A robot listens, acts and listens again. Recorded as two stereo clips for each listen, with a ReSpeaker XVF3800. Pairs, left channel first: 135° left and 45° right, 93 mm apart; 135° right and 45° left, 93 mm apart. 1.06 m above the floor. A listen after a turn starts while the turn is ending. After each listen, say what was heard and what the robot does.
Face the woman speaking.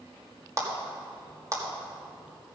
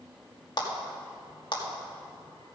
Keep listening.
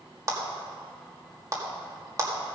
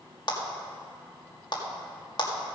Keep listening.
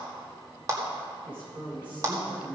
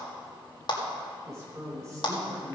The woman speaking: 10° right. Turn 10° right.
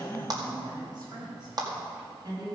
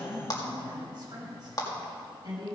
Found it: a woman speaking, straight ahead, over 4 m away.